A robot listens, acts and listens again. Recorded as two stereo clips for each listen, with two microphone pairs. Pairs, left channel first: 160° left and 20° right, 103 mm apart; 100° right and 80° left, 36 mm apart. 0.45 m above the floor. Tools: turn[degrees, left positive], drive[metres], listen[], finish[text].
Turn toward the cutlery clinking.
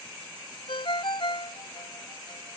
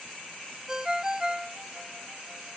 Action: listen[]
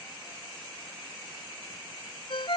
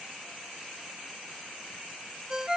Action: listen[]
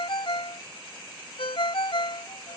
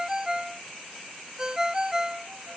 Action: finish[I can't make out cutlery clinking to turn to.]